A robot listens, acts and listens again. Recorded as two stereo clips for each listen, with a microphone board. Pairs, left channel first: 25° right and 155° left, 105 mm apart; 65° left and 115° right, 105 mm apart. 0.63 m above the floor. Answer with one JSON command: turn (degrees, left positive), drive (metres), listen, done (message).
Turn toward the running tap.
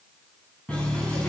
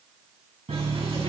{"turn": -100}
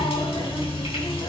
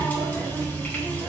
{"done": "Found it: a running tap, straight ahead."}